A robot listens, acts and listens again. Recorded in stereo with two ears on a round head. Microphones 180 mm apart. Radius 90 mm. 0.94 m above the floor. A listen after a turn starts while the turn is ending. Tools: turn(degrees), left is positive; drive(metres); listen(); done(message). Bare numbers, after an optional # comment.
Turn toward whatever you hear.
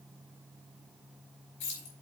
# The keys jangling: about 60° left or 120° left.
turn(60)
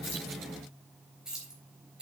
done("Facing the keys jangling.")